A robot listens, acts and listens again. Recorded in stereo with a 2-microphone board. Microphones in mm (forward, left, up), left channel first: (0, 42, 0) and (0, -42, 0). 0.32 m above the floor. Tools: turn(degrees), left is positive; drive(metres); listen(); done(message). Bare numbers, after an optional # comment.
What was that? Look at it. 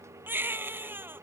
# The baby crying: about 25° right or 155° right.
turn(-25)
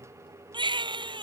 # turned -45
# So it is at 110° right.
turn(-110)
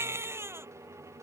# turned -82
# The baby crying is now 30° right.
turn(-30)
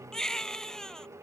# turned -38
done("Found it: a baby crying, straight ahead.")